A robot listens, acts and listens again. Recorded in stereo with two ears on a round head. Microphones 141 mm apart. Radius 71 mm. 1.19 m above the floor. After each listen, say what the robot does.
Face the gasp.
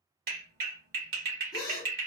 Turn 30° left.
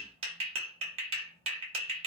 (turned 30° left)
Keep listening.
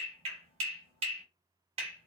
I heard a gasp, but can't make it out now. It was about straight ahead or 120° left.